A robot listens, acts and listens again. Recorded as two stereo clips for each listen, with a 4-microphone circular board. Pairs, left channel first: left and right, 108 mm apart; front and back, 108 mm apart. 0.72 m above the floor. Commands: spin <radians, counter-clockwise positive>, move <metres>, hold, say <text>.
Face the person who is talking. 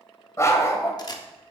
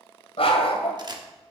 hold
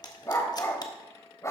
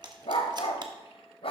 hold
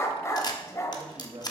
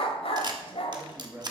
spin -1.92
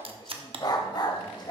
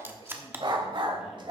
hold
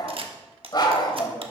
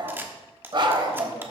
hold
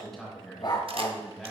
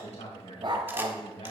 say Found it: a man speaking, straight ahead.